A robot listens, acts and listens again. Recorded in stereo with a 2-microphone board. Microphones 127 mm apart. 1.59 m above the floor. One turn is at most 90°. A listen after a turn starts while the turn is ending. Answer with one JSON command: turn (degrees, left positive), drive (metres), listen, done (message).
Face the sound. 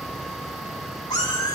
{"turn": 30}
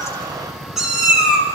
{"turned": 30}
{"done": "Facing the cat meowing."}